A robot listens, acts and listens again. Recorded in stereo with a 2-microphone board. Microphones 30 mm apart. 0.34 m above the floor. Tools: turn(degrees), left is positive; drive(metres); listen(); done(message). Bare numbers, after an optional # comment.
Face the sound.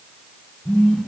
# The phone buzzing: about 35° left or 145° left.
turn(35)
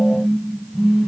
done("Facing the phone buzzing, 2 to 4 m away.")